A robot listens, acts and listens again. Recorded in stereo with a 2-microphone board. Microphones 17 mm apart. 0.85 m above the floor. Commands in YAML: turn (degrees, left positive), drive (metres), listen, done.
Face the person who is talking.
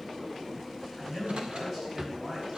turn: -15
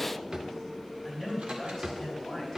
done: "Facing the man speaking."